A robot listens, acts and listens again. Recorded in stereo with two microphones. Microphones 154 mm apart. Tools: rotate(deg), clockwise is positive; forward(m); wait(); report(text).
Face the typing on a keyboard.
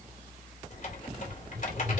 rotate(-60)
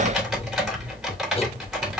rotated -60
report("Found it: typing on a keyboard, straight ahead.")